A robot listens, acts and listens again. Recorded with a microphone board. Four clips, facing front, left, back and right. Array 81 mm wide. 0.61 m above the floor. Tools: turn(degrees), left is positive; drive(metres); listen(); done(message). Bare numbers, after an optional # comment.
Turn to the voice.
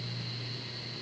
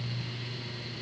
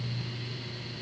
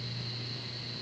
listen()
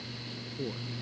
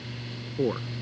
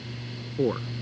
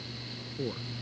# The man speaking: 150° left.
turn(150)
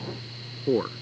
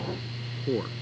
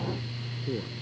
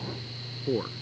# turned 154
done("Found it: a man speaking, straight ahead.")